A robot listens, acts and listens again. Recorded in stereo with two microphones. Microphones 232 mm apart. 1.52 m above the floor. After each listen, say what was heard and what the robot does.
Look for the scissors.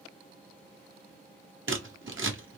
The scissors: about 60° right or 120° right. Turn 60° right.
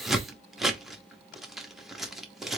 Found it: scissors, straight ahead, under 1 m away.